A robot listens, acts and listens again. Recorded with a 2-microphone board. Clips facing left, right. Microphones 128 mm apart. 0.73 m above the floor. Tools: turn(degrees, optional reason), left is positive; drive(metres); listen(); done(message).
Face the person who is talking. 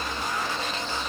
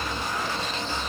listen()
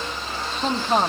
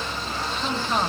turn(degrees=45, reason="The woman speaking: about 45° left or 135° left.")
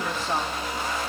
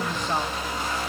listen()
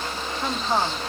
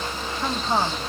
done("Found it: a woman speaking, straight ahead.")